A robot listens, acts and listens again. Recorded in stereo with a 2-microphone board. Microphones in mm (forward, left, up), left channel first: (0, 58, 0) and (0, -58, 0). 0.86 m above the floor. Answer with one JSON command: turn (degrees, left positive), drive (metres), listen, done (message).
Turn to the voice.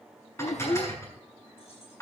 {"turn": 90}
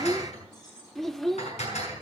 {"done": "Facing the child speaking."}